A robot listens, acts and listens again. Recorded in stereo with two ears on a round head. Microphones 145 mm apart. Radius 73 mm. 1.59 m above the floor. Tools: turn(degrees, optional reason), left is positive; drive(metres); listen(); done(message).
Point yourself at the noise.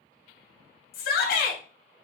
turn(degrees=65, reason="The shout: about 65° left or 115° left.")
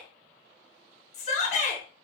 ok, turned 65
turn(degrees=45, reason="So it is at 45° left.")
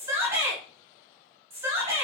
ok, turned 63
turn(degrees=-15, reason="The shout is now 15° right.")
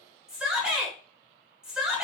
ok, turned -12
done("Facing the shout.")